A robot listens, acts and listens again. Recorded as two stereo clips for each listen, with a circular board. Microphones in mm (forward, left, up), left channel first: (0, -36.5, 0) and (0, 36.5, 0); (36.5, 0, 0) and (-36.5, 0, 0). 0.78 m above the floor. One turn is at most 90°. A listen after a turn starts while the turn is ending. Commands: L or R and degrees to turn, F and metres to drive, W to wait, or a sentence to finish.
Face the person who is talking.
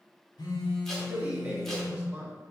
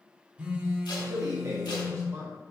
L90
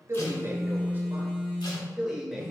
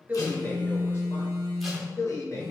Facing the man speaking, 1 to 2 m away.